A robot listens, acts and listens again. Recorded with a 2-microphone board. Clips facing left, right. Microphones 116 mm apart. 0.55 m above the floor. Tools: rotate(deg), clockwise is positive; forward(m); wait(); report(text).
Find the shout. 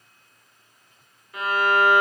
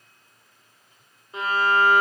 wait()
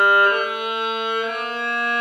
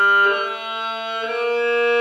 wait()
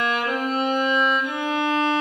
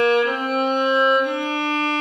report("I can't make out a shout to turn to.")